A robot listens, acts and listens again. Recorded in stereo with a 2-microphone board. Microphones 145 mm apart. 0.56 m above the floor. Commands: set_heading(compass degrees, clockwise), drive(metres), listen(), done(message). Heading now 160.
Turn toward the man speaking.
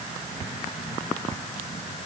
listen()
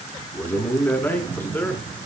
set_heading(130)
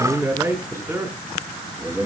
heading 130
set_heading(150)
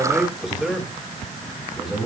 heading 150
done("Facing the man speaking, over 4 m away.")